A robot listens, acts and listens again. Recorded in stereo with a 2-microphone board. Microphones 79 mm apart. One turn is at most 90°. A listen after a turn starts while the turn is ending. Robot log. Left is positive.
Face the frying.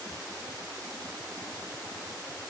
cmd idle
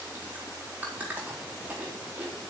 cmd idle
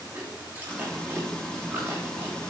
cmd yaw +30
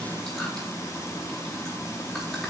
note: So it is at 140° left.
cmd yaw +90
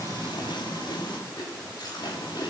note: The frying is now 80° left.
cmd yaw +80
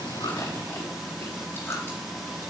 end: Found it: frying, straight ahead, 2 to 4 m away.